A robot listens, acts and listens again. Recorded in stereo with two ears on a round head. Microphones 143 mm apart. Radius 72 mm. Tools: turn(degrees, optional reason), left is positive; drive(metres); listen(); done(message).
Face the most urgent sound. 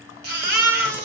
turn(degrees=-70, reason="The baby crying: about 70° right or 110° right.")
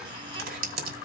listen()
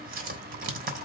listen()
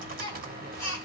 turn(degrees=-35, reason="So it is at 35° right.")
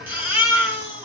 turn(degrees=-15, reason="The baby crying is now 15° right.")
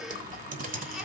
listen()
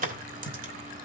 listen()
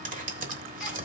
done("Facing where the baby crying came from. I can't hear it now.")